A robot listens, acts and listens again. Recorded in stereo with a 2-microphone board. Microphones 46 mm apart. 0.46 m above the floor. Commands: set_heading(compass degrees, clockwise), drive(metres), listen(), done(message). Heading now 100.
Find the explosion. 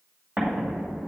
set_heading(140)
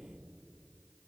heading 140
listen()
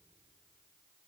done("I heard an explosion, but can't make it out now. It was about straight ahead or 100° right.")